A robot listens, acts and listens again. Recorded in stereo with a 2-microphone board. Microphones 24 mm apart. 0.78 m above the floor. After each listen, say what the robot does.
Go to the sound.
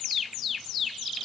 Keep listening.
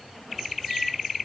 Keep listening.
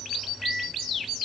Turn 25° right.
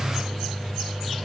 Turn 130° right.
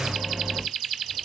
Turn 35° right.
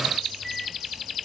Turn 10° left.
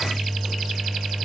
Drive 1.0 m forward.
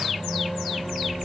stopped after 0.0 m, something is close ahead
Turn 10° left.
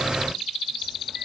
Something is in my way. I am facing the microwave but have not reached it.